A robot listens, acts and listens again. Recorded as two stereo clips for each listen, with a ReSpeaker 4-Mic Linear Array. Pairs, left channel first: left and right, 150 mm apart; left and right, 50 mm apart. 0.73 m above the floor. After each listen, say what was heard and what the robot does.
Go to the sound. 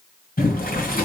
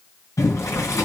Turn 90° left.
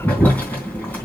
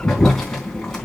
So it is at 10° left. Turn 10° left.
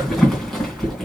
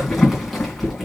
Drive 1.0 m forward.
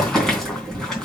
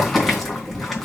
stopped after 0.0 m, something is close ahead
Blocked. The boiling is further on, straight ahead.